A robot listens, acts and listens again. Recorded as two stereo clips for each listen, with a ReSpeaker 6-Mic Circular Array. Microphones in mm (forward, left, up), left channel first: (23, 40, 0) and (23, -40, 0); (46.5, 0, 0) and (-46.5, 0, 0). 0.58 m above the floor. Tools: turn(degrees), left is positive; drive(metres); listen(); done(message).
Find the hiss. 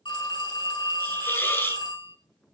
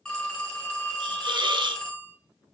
turn(degrees=150)
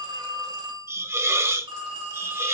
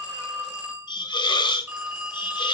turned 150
turn(degrees=-35)
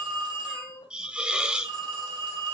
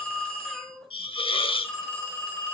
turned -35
turn(degrees=-10)
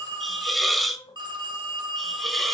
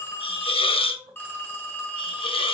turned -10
done("Facing the hiss.")